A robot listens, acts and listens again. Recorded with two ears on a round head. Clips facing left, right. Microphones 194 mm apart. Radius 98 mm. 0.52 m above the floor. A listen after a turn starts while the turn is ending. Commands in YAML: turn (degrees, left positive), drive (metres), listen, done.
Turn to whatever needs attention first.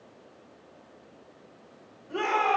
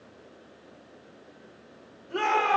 turn: 30
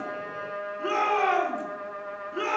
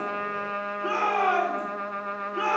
turn: 150
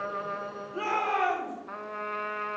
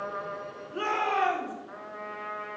turn: -15
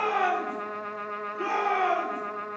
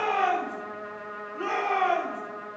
done: "Found it: a shout, straight ahead, 2 to 4 m away."